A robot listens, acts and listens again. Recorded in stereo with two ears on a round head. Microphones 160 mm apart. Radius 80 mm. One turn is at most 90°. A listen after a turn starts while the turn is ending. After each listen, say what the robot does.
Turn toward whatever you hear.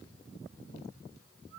Keep listening.
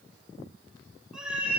Turn 30° right.
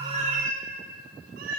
Turn 90° right.
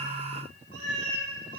Turn 55° right.
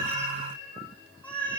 Found it: a cat meowing, straight ahead, 2 to 4 m away.